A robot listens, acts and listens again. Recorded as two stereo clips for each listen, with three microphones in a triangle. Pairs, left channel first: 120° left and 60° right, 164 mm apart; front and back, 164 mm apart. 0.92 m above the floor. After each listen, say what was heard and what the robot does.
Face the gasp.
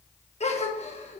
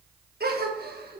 The gasp: 170° left. Turn 170° left.
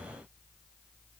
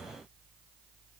Facing where the gasp came from. I can't hear it now.